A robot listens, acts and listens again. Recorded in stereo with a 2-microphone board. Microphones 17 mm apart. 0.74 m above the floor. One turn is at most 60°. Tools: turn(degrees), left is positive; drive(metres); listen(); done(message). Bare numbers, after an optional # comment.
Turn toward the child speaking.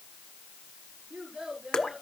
# The child speaking: about 70° right or 110° right.
turn(-60)
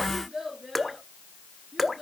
done("Facing the child speaking.")